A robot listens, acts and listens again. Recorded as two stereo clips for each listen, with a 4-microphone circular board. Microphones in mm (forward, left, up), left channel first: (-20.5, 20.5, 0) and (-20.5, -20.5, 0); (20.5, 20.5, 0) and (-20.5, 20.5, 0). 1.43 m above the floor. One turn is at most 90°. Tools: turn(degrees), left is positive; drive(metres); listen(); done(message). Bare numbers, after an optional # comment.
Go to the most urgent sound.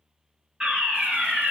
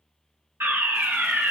# The fire alarm: 155° right.
turn(-90)
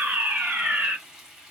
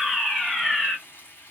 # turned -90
# The fire alarm is now 80° right.
turn(-80)
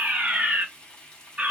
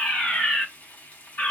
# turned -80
# The fire alarm is now 35° right.
turn(-35)
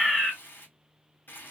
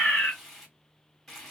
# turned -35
# The fire alarm is now 15° left.
turn(15)
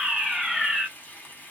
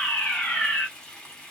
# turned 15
drive(1.0)
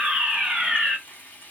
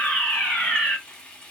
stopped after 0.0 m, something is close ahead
done("Something is in my way. I am facing the fire alarm but have not reached it.")